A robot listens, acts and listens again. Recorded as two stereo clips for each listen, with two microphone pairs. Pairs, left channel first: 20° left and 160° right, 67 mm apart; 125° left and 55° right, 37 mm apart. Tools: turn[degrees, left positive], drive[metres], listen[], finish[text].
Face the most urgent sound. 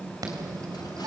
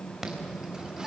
Thought: The alarm: 130° right.
Action: turn[-130]
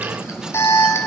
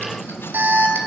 Thought: The alarm is now 25° right.
Action: turn[-25]
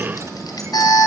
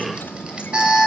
Thought: The alarm is now 10° left.
Action: turn[10]
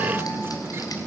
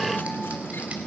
Action: finish[Found it: an alarm, straight ahead, 2 to 4 m away.]